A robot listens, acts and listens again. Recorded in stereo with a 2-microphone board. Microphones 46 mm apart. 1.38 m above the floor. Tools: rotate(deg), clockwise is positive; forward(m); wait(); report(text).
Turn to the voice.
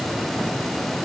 wait()
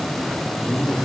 rotate(-30)
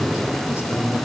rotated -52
rotate(-100)
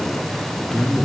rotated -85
rotate(-15)
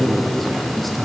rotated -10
report("Facing the man speaking.")